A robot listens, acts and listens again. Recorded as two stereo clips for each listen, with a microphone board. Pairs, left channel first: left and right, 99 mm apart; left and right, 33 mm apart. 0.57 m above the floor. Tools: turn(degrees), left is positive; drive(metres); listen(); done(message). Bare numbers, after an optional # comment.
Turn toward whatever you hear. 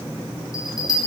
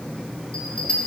# The bell: about 40° left or 140° left.
turn(40)
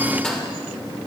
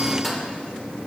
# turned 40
# So it is at 10° left.
turn(10)
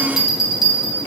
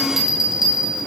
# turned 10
done("Facing the bell.")